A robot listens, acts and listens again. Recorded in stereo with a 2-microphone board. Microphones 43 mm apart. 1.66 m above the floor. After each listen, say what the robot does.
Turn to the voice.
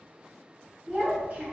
Turn 30° right.
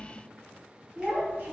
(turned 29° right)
Turn 115° right.
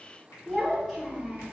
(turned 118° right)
Found it: a child speaking, straight ahead.